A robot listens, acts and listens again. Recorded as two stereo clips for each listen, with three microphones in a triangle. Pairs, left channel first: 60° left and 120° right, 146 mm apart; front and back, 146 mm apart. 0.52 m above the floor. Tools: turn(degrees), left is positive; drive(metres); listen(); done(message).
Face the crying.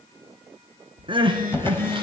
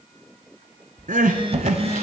turn(degrees=-170)
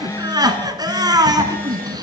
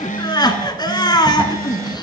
turn(degrees=-60)
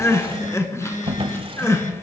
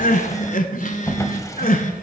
turn(degrees=-10)
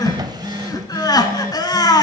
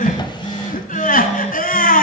done("Found it: crying, straight ahead.")